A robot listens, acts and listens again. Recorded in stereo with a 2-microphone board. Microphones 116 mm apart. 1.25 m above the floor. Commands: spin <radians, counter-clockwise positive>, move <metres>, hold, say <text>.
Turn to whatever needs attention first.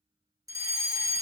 spin -0.52
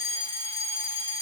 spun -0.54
spin -1.92
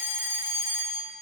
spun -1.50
spin -0.44
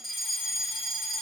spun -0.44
say Facing the fire alarm.